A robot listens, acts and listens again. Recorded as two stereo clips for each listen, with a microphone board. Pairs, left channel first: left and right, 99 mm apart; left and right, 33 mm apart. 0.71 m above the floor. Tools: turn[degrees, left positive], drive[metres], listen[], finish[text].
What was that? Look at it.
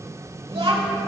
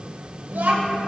Thought: The child speaking: about 70° right or 110° right.
Action: turn[-70]
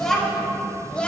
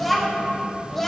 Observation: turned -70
Thought: So it is at 15° left.
Action: turn[15]
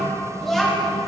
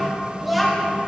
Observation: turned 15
Action: finish[Found it: a child speaking, straight ahead, 2 to 4 m away.]